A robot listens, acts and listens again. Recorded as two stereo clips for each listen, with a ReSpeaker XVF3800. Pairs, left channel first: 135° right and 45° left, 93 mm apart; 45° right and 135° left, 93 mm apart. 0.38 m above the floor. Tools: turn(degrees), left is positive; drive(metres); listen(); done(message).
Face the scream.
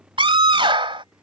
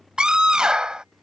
turn(degrees=55)
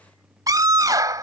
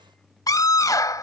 done("Found it: a scream, straight ahead.")